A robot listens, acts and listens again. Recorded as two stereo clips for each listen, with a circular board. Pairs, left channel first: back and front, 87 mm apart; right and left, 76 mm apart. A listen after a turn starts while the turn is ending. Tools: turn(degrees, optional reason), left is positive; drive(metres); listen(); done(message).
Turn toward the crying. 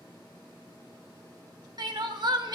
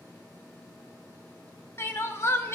turn(degrees=-35, reason="The crying: 35° right.")
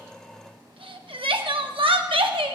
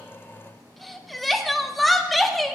done("Facing the crying, under 1 m away.")